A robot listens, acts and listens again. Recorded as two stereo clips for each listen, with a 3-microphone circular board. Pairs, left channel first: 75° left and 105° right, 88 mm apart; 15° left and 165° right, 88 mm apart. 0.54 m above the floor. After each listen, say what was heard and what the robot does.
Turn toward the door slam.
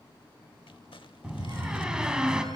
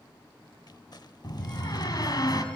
The door slam: 25° right. Turn 25° right.
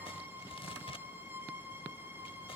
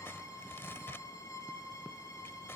Facing where the door slam came from. I can't hear it now.